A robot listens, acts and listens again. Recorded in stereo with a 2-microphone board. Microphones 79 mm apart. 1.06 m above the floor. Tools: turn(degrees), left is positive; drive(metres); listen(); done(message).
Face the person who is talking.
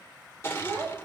turn(degrees=-35)
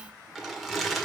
listen()
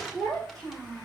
done("Facing the child speaking.")